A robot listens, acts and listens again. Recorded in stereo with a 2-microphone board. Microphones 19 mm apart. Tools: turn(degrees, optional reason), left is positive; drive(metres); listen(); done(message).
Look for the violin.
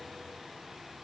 listen()
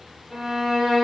turn(degrees=-20, reason="The violin: about 20° right or 160° right.")
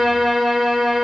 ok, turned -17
done("Found it: a violin, straight ahead.")